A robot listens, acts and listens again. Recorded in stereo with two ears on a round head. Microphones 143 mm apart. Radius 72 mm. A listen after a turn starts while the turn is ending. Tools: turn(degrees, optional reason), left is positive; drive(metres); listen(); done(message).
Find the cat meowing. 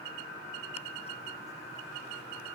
listen()
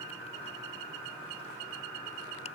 listen()
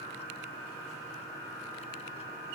done("I can't make out a cat meowing to turn to.")